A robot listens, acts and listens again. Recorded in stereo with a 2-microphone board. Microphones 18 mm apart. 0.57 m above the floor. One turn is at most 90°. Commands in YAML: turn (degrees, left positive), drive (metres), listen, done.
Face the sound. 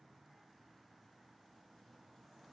listen: true
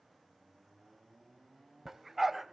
turn: -30
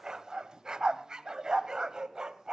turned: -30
turn: -90
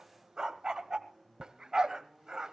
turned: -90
turn: -40
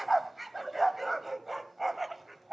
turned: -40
done: "Facing the dog barking, 1 to 2 m away."